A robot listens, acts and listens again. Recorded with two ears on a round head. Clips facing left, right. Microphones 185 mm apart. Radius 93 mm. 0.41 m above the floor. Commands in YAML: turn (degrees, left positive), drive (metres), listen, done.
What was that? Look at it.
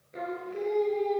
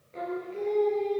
turn: 15
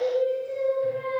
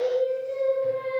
turn: 30
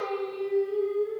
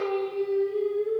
turn: -25
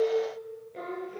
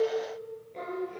done: "Found it: singing, straight ahead."